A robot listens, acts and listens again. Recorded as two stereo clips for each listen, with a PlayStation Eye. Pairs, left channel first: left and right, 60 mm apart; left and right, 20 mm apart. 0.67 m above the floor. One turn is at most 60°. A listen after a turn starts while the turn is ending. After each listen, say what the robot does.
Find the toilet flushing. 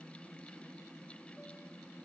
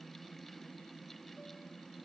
Keep listening.
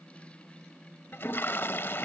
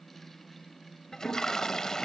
Turn 40° left.
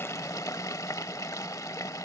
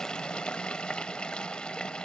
Turn 60° left.
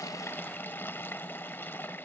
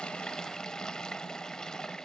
Turn 40° left.
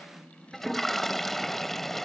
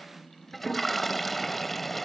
Facing the toilet flushing.